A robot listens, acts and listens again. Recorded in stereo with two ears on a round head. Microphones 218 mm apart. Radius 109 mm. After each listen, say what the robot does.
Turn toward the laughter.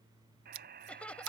Turn 30° left.
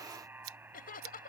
Turn 140° left.
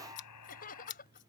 Turn 35° left.
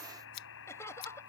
Turn 10° left.
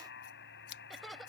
Found it: laughter, straight ahead.